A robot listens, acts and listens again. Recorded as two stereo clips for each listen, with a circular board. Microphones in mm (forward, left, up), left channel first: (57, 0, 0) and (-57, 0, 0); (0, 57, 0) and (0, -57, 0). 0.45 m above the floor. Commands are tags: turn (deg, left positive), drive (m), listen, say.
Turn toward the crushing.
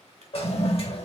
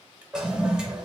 <listen/>
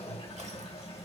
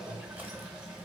<listen/>
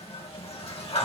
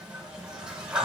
<say>I can't make out crushing, only a toilet flushing.</say>